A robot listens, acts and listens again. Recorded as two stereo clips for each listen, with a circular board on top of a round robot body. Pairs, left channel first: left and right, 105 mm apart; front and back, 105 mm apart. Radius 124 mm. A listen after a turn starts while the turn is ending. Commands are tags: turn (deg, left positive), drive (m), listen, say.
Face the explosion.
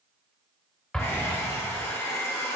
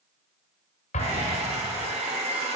<say>Facing the explosion.</say>